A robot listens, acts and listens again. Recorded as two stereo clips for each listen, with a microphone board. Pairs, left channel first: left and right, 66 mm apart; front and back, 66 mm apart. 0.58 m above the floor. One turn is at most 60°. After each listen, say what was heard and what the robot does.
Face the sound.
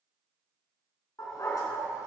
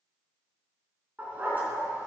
The dog barking: 120° left. Turn 60° left.
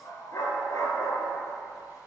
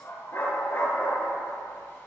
The dog barking is now 55° left. Turn 55° left.
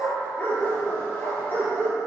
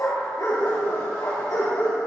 The dog barking is now 30° left. Turn 30° left.
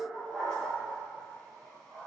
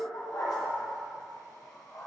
The dog barking is now 10° left. Turn 10° left.
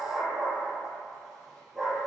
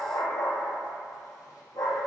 Found it: a dog barking, straight ahead, over 4 m away.